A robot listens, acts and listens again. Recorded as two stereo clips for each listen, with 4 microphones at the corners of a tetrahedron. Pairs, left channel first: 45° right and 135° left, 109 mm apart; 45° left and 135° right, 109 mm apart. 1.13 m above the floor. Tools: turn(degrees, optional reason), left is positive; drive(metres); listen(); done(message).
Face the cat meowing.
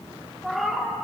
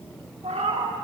turn(degrees=-135, reason="The cat meowing: 135° right.")
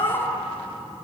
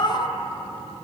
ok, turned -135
done("Found it: a cat meowing, straight ahead, 1 to 2 m away.")